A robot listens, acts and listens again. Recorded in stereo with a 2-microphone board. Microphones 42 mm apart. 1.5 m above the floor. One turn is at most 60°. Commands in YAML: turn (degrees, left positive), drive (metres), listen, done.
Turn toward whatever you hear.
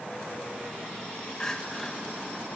turn: 30
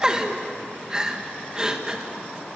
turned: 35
turn: -20
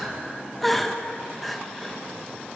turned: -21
done: "Found it: crying, straight ahead."